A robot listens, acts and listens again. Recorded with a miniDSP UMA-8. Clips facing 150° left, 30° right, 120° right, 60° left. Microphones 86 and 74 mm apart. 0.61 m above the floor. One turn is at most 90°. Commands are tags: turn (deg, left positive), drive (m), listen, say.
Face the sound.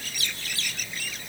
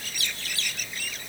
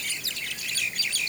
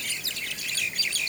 <listen/>
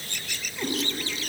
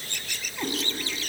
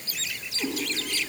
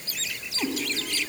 <turn deg="30"/>
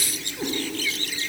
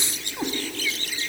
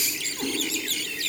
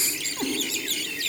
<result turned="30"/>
<say>Found it: a cat meowing, straight ahead.</say>